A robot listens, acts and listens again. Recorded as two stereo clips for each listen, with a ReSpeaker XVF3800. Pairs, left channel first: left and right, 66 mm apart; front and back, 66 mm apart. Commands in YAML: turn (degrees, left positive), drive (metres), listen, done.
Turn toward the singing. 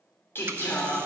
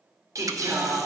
turn: 150
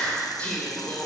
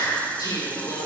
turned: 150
turn: 25
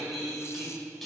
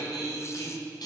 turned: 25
done: "Found it: singing, straight ahead."